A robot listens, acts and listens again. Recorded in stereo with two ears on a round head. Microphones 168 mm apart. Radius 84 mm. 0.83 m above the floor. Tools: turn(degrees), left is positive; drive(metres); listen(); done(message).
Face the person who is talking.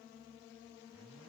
listen()
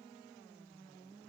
listen()
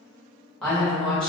turn(degrees=30)
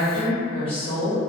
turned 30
turn(degrees=145)
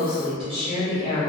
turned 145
turn(degrees=-30)
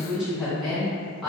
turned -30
done("Facing the woman speaking.")